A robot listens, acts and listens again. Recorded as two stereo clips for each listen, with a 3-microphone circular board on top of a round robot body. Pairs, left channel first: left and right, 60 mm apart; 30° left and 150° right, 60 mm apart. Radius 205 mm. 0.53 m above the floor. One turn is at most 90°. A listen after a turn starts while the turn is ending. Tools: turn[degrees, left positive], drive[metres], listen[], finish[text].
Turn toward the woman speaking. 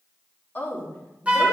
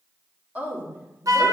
Thought: The woman speaking: 160° left.
Action: turn[90]
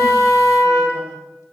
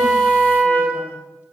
Thought: Nothing new. It was at 70° left.
Action: turn[70]
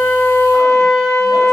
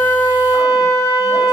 Action: listen[]
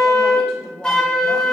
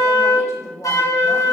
Thought: The woman speaking is now 10° left.
Action: turn[10]
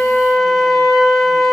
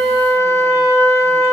Action: listen[]
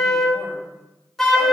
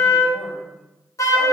Action: listen[]
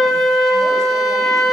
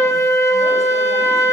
Action: finish[I heard a woman speaking from this way, but can't make it out now.]